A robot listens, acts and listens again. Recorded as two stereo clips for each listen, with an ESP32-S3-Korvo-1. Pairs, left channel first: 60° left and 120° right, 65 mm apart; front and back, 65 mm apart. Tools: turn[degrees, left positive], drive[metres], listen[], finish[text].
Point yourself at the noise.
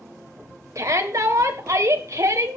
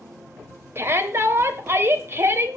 Thought: The shout: 140° right.
Action: turn[-140]
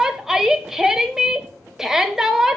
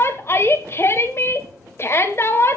Thought: The shout is now 40° right.
Action: turn[-40]
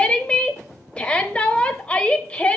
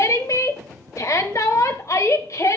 Thought: The shout is now 10° right.
Action: turn[-10]
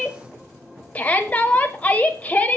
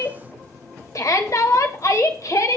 Action: finish[Facing the shout, 1 to 2 m away.]